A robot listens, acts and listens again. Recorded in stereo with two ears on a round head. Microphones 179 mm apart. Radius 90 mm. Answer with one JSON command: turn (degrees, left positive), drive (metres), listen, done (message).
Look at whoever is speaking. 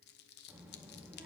{"turn": -30}
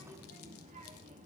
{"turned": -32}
{"turn": -140}
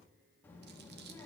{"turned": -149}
{"turn": 10}
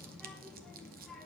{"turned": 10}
{"done": "Found it: a child speaking, straight ahead, 1 to 2 m away."}